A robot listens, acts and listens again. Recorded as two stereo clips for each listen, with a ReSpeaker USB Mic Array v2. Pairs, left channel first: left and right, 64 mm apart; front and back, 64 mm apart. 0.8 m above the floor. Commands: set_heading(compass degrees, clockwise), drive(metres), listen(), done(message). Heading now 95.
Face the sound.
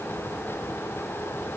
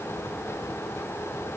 listen()
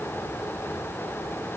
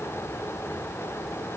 listen()
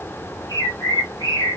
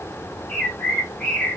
set_heading(30)
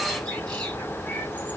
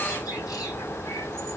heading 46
set_heading(26)
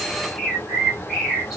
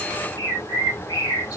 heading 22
done("Found it: a bird, straight ahead.")